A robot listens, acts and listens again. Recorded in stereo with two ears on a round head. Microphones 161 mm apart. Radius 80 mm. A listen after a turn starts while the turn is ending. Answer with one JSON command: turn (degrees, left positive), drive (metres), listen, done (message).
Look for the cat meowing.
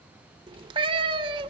{"turn": -30}
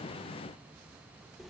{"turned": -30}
{"listen": true}
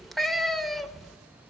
{"done": "Found it: a cat meowing, straight ahead."}